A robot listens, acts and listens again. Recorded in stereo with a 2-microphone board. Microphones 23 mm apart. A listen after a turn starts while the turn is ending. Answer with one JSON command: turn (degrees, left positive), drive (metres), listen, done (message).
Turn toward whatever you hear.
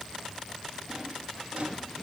{"turn": -90}
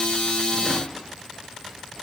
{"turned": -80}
{"turn": -10}
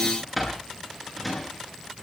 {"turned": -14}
{"done": "Found it: a drawer, straight ahead, over 4 m away."}